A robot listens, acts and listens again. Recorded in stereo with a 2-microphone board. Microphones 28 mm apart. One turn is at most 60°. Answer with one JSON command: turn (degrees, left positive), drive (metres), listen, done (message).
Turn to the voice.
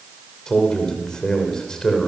{"turn": 25}
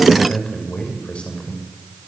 {"turn": 60}
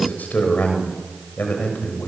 {"turn": 60}
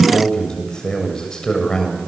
{"turn": 25}
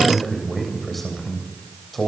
{"done": "Found it: a man speaking, straight ahead, over 4 m away."}